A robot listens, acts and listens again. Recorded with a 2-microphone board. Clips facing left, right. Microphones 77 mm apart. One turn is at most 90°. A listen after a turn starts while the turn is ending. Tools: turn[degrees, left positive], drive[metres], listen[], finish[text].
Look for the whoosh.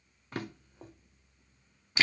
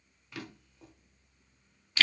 Action: listen[]
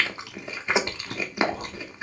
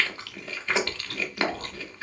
Action: listen[]
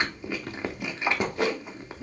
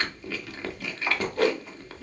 Thought: The whoosh: about 40° right or 140° right.
Action: turn[-40]
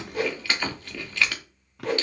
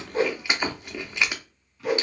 Thought: So it is at 10° right.
Action: turn[-10]
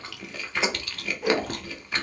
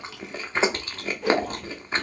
Action: finish[Facing the whoosh.]